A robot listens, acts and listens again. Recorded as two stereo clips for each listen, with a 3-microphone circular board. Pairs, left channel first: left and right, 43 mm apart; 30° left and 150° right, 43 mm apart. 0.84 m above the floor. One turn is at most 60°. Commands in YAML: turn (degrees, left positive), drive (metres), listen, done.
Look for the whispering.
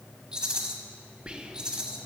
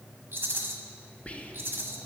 turn: -25
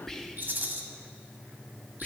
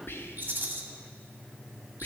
turn: 10
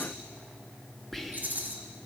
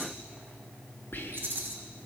done: "Found it: whispering, straight ahead, under 1 m away."